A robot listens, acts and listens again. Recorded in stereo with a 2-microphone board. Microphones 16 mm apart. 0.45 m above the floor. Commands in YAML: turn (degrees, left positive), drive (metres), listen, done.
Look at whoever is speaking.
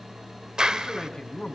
turn: 70
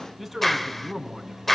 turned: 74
done: "Facing the man speaking."